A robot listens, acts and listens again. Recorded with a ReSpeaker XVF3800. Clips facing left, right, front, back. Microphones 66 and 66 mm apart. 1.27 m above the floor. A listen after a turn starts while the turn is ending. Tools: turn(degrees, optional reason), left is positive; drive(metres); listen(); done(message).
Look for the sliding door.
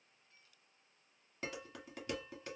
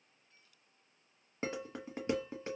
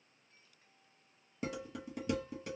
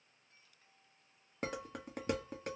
listen()
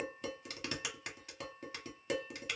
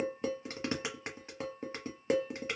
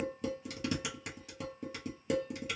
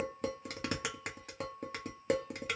listen()
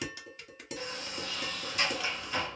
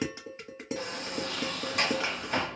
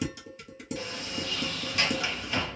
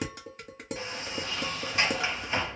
turn(degrees=-120, reason="The sliding door: 120° right.")
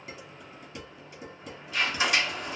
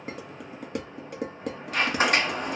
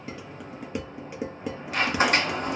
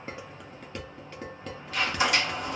turn(degrees=-45, reason="The sliding door is now 45° right.")
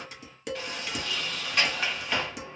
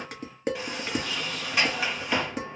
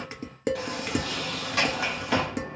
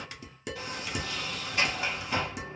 turn(degrees=-10, reason="The sliding door is now 10° right.")
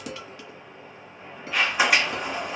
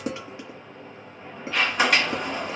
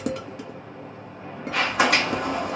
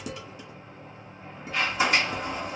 done("Found it: a sliding door, straight ahead, under 1 m away.")